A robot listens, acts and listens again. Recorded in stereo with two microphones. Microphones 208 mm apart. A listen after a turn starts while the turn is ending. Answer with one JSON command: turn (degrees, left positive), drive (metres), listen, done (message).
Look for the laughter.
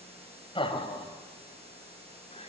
{"turn": 30}
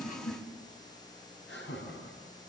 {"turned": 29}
{"turn": 115}
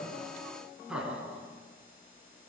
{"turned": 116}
{"done": "Found it: laughter, straight ahead, over 4 m away."}